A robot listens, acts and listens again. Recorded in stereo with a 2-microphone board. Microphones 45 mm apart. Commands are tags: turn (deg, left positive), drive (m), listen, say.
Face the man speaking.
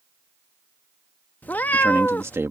<turn deg="-70"/>
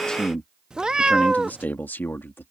<turn deg="55"/>
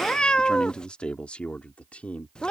<turn deg="30"/>
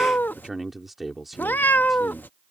<say>Found it: a man speaking, straight ahead.</say>